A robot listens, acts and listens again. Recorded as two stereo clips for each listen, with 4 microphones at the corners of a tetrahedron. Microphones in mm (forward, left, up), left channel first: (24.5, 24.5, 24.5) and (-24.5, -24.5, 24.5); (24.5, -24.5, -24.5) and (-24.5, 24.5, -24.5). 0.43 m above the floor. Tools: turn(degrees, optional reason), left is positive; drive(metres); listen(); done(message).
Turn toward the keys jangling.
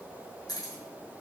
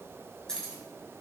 turn(degrees=35, reason="The keys jangling: 35° left.")
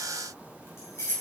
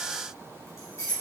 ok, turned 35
done("Facing the keys jangling, 2 to 4 m away.")